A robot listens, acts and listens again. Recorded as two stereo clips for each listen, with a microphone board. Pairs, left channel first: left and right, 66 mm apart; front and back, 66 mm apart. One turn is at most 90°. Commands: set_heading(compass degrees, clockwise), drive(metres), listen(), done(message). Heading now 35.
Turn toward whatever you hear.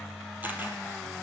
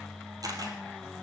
set_heading(125)
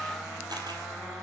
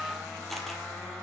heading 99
set_heading(189)
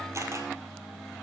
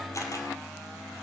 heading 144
set_heading(189)
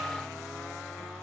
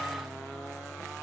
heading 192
listen()
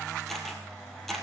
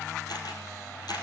done("Facing the camera shutter, 2 to 4 m away.")